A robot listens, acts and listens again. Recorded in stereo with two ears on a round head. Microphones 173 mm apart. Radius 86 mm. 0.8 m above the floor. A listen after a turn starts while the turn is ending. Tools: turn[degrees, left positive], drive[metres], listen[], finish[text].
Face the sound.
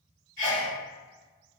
Thought: The sneeze: about 50° right or 130° right.
Action: turn[-50]
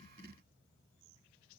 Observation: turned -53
Action: listen[]
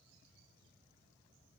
Action: finish[I heard a sneeze, but can't make it out now. It was about straight ahead or 75° right.]